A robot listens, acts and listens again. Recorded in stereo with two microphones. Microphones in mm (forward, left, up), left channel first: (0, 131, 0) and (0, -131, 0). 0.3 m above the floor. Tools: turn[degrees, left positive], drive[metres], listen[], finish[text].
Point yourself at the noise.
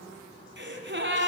Thought: The gasp: about 45° right or 135° right.
Action: turn[-45]
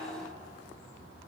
Action: listen[]
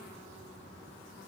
Action: finish[I heard a gasp, but can't make it out now. It was about straight ahead or 90° right.]